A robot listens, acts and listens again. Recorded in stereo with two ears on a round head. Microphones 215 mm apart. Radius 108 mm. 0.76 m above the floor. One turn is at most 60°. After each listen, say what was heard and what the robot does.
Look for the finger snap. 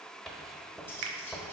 The finger snap: about 60° right or 120° right. Turn 60° right.
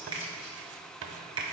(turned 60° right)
So it is at 20° right. Turn 20° right.
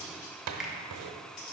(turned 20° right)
Found it: a finger snap, straight ahead.